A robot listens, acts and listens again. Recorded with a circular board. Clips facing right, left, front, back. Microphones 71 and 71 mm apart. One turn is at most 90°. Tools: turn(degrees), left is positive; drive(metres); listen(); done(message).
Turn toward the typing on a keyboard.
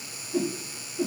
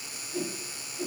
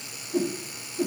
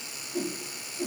listen()
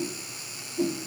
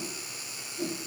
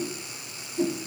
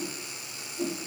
listen()
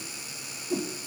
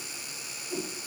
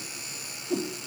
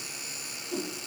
done("I can't make out typing on a keyboard to turn to.")